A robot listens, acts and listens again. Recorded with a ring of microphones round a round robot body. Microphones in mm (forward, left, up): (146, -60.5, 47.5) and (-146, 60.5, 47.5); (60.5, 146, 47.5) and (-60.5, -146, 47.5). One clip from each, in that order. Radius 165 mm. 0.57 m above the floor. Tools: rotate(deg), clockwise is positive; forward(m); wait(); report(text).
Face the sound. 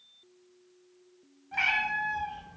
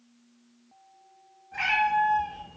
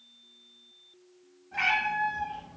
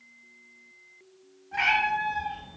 rotate(30)
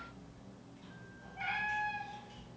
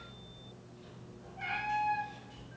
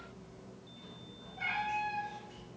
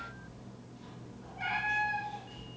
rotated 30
rotate(10)
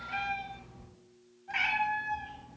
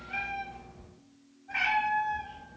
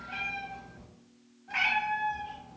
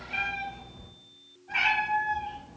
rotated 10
report("Facing the cat meowing, 1 to 2 m away.")